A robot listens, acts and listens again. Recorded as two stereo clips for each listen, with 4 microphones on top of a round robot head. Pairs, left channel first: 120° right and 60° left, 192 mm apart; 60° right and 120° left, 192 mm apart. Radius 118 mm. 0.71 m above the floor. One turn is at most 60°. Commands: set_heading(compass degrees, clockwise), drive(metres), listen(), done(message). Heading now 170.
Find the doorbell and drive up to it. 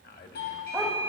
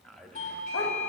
set_heading(230)
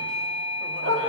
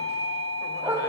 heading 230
set_heading(265)
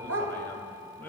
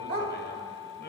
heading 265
listen()
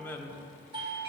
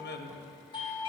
drive(1.0)
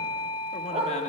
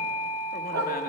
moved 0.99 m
drive(1.0)
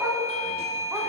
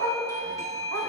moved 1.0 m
set_heading(255)
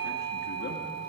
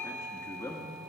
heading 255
drive(1.0)
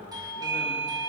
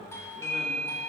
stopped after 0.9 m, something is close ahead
done("Arrived at the doorbell, straight ahead.")